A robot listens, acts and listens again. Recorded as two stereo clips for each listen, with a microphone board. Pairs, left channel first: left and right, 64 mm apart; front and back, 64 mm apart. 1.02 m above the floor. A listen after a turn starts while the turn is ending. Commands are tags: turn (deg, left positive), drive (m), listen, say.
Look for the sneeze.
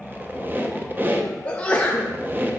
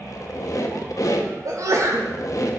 <turn deg="160"/>
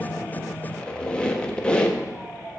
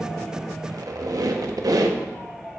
<say>Facing where the sneeze came from. I can't hear it now.</say>